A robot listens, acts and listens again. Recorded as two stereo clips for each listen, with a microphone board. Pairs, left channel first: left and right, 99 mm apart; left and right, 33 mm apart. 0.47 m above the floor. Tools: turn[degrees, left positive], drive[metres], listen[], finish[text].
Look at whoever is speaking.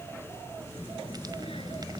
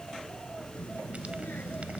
Thought: The child speaking: about 65° left or 115° left.
Action: turn[65]
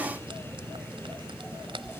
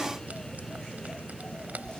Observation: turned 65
Action: finish[Facing the child speaking.]